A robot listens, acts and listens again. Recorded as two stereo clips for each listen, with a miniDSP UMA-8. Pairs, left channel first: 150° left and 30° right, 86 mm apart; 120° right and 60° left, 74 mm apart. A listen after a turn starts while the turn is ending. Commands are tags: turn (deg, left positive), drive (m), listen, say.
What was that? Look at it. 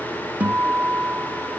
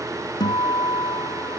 <turn deg="-105"/>
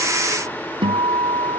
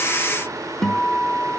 <turn deg="-35"/>
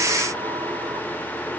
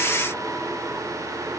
<listen/>
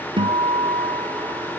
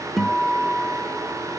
<turn deg="-30"/>
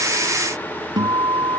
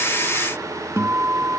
<say>Facing the guitar.</say>